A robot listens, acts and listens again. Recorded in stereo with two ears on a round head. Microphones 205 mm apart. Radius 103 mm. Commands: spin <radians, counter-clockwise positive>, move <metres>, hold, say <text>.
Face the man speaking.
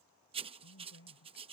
spin 0.96
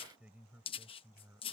spin -0.17
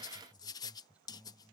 say Found it: a man speaking, straight ahead.